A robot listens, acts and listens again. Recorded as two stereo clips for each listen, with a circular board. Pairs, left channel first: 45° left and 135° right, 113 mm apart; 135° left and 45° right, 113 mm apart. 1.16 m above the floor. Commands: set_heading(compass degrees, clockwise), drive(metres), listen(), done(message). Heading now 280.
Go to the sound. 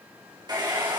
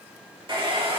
set_heading(5)
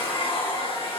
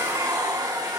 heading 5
set_heading(355)
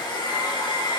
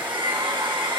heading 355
drive(1.0)
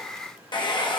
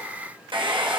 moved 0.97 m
drive(1.0)
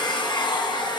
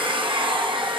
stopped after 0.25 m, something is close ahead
done("I am next to the hair dryer.")